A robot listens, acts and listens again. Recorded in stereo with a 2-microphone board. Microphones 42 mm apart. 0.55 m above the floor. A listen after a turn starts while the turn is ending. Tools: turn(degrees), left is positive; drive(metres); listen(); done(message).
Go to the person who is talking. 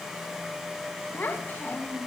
turn(degrees=50)
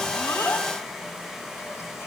listen()
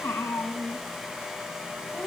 turn(degrees=80)
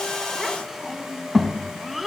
drive(metres=1.0)
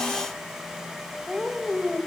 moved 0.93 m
turn(degrees=-10)
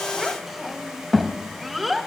drive(metres=1.0)
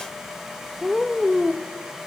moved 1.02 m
drive(metres=1.0)
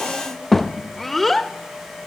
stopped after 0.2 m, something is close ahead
done("Arrived at the child speaking, straight ahead.")